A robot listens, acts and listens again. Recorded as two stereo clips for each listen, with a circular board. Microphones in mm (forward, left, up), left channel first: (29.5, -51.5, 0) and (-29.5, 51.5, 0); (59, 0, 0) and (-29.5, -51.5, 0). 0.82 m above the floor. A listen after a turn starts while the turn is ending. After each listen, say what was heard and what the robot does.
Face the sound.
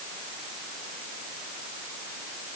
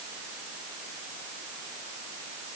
Keep listening.
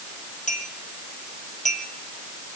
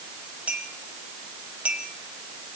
The clink: 70° right. Turn 70° right.
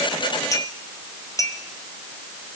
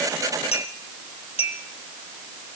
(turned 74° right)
Found it: a clink, straight ahead.